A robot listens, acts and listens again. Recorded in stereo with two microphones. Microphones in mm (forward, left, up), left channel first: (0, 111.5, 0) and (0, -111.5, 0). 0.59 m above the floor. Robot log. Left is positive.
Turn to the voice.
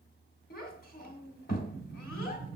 note: The child speaking: about 45° left or 135° left.
cmd yaw +45
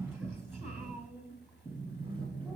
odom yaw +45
end: Found it: a child speaking, straight ahead.